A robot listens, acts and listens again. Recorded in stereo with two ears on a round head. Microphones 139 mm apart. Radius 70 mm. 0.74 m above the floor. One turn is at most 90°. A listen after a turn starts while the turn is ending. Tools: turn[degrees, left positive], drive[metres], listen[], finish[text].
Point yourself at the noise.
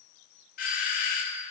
Thought: The doorbell: about 55° left or 125° left.
Action: turn[55]
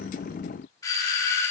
Thought: So it is at 25° left.
Action: turn[25]
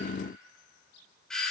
Action: finish[Found it: a doorbell, straight ahead, 2 to 4 m away.]